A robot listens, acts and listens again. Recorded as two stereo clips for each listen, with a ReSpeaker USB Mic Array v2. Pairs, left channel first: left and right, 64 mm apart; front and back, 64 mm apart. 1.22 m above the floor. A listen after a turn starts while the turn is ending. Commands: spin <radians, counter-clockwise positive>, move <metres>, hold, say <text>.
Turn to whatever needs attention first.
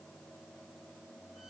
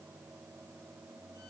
hold
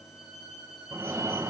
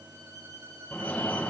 spin -1.05
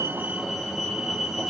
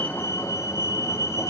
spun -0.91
spin -0.17
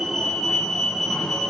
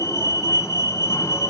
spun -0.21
say Found it: a fire alarm, straight ahead, 1 to 2 m away.